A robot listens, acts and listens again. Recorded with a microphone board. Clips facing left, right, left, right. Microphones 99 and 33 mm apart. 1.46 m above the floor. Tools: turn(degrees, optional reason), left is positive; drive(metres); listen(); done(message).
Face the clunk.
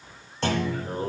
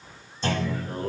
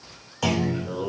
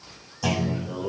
turn(degrees=70, reason="The clunk: about 70° left or 110° left.")
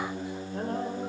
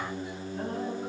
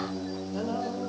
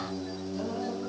listen()
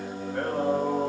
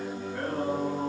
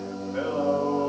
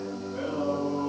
done("I heard a clunk, but can't make it out now. It was about straight ahead or 40° left.")